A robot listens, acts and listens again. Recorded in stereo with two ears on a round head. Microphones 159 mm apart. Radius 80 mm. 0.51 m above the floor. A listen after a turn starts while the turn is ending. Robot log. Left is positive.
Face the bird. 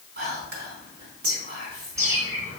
note: The bird: about 20° right or 160° right.
cmd yaw -20
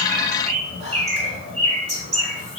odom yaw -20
note: So it is at 140° right.
cmd yaw -140
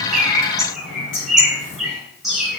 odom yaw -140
end: Found it: a bird, straight ahead, 2 to 4 m away.